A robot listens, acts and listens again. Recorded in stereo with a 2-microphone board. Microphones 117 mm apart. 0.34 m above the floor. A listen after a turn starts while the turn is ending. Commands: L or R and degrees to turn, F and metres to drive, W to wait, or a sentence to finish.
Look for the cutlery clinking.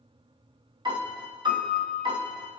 W
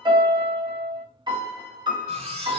R50
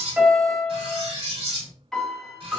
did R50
R60
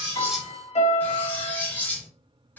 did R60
L15
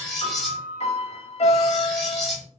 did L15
Found it: cutlery clinking, straight ahead.